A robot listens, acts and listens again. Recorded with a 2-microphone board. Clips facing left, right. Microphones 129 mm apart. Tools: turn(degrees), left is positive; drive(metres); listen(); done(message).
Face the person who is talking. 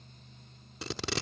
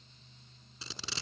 listen()
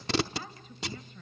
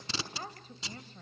turn(degrees=-35)
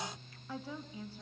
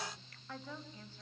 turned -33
turn(degrees=10)
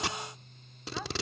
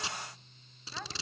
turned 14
done("Found it: a woman speaking, straight ahead.")